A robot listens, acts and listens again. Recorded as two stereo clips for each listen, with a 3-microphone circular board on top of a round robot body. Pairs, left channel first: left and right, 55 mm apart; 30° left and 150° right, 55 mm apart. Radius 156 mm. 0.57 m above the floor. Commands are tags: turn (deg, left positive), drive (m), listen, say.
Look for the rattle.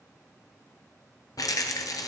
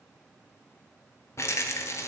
<turn deg="75"/>
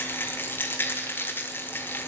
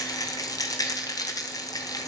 <turn deg="35"/>
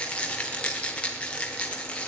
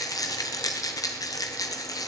<turn deg="20"/>
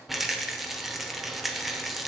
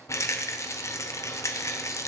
<say>Found it: a rattle, straight ahead, under 1 m away.</say>